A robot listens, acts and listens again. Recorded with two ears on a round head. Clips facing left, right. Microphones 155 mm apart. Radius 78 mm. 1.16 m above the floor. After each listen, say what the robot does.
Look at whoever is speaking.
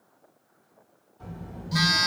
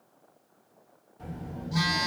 Turn 20° right.
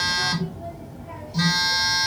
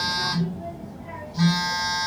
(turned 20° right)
Turn 15° right.
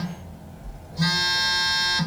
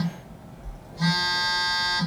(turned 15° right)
Turn 30° left.
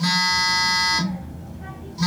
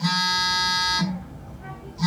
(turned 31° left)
Turn 140° left.
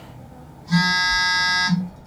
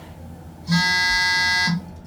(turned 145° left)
Found it: a child speaking, straight ahead, 1 to 2 m away.